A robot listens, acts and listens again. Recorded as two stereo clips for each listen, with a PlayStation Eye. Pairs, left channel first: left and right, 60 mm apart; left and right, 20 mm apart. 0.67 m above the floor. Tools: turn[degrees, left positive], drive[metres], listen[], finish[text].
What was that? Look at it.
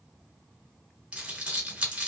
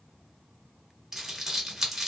Thought: The crumpling: about 15° right or 165° right.
Action: turn[-15]
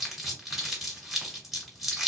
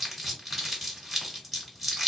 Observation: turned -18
Action: finish[Facing the crumpling.]